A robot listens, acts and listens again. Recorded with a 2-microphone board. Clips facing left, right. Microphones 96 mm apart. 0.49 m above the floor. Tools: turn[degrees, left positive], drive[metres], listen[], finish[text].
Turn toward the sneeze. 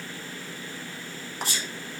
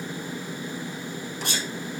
Thought: The sneeze: about 70° right or 110° right.
Action: turn[-70]
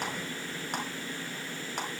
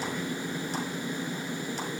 Action: listen[]
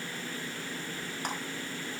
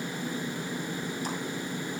Action: finish[I heard a sneeze, but can't make it out now. It was about straight ahead or 40° right.]